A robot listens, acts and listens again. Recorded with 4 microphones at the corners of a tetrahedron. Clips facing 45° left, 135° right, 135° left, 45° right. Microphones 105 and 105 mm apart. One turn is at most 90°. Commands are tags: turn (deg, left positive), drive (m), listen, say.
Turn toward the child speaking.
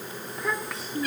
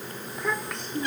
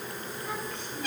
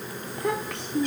<turn deg="-40"/>
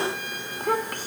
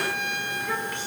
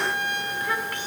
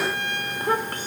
<say>Facing the child speaking.</say>